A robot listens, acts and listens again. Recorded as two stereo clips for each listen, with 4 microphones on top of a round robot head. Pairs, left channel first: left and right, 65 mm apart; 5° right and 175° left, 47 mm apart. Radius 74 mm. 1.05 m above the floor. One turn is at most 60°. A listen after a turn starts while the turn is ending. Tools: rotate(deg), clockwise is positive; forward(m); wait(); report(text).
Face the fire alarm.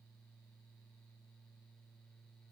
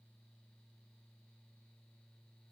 wait()
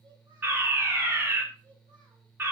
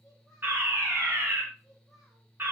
rotate(60)
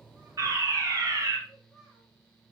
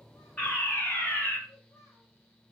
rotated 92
rotate(50)
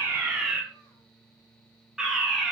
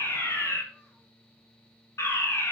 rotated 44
report("Found it: a fire alarm, straight ahead, 2 to 4 m away.")